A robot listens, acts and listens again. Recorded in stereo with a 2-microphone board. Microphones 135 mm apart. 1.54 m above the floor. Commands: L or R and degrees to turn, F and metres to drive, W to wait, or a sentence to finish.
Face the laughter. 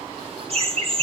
R45
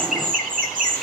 R80
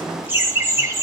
R20
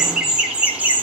R15
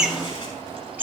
R15
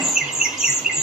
Facing the laughter, 2 to 4 m away.